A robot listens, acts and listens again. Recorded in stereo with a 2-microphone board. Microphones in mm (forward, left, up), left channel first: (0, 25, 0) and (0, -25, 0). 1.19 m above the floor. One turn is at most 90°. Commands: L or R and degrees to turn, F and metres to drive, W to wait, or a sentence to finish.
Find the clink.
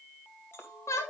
L55
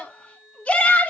W
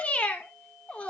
W
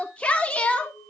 L65
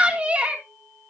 W
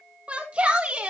W
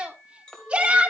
L15
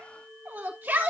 Found it: a clink, straight ahead, 2 to 4 m away.